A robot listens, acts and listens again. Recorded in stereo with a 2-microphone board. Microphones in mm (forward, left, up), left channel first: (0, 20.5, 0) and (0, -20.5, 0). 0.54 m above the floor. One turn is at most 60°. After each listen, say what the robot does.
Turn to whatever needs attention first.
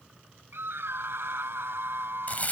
Turn 60° right.
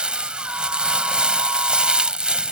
Keep listening.
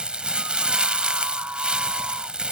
Turn 45° right.
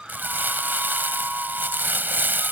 Turn 15° right.
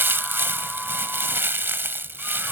Keep listening.
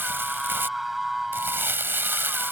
Found it: a scream, straight ahead.